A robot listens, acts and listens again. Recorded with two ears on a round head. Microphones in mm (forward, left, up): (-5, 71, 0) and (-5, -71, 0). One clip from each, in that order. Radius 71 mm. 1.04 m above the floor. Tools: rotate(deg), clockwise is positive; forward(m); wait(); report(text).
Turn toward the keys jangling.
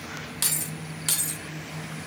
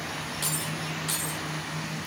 rotate(-60)
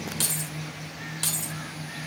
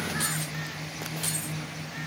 rotate(-50)
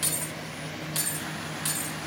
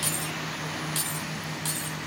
rotate(-10)
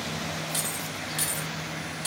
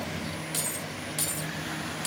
report("Found it: keys jangling, straight ahead, 2 to 4 m away.")